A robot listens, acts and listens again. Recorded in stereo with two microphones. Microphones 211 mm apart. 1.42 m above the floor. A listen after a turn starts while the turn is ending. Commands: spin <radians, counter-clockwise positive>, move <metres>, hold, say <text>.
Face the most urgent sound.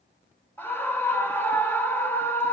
spin 0.52
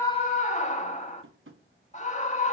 spin 2.44
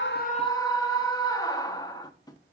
spin 0.35
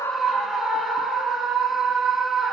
say Facing the scream.